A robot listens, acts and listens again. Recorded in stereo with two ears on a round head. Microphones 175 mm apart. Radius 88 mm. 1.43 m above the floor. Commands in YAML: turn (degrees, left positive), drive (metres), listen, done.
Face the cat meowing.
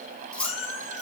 turn: 30
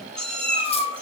done: "Found it: a cat meowing, straight ahead, over 4 m away."